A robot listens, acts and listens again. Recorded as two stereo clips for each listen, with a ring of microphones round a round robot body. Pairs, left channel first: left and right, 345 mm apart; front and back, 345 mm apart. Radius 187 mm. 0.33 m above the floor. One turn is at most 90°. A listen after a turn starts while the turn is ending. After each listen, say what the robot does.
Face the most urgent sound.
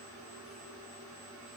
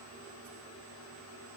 Keep listening.
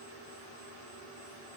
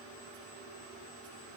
Keep listening.
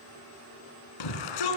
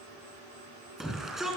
Turn 90° left.
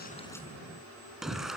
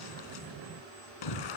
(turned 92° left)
Facing the shout, 2 to 4 m away.